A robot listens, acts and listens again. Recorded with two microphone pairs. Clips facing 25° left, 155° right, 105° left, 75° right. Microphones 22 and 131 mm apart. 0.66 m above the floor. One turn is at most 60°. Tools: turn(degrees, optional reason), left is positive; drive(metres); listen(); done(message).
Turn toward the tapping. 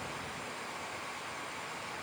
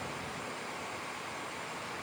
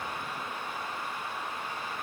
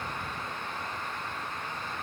listen()
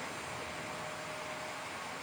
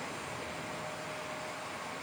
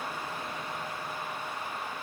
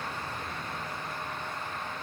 listen()
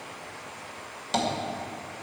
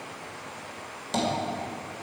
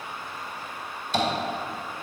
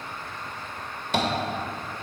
turn(degrees=-50, reason="The tapping: 50° right.")
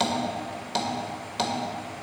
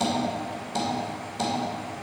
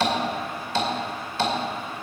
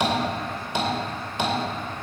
done("Facing the tapping, 2 to 4 m away.")